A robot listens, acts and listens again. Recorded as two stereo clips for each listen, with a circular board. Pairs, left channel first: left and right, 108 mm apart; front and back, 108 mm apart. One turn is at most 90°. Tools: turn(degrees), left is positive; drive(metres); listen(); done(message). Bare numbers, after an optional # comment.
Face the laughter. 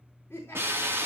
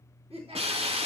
# The laughter: 155° left.
turn(90)
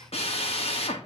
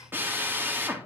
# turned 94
# Nothing new. It was at 65° left.
turn(65)
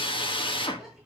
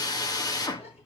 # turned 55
done("Facing the laughter, over 4 m away.")